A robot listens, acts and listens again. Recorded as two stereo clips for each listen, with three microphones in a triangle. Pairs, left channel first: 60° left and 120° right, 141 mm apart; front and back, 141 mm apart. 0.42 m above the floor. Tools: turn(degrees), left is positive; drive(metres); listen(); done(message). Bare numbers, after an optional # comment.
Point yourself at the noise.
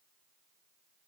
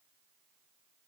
listen()
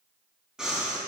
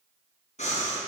# The breathing: 35° right.
turn(-35)
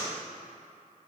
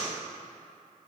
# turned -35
done("Facing the breathing, 2 to 4 m away.")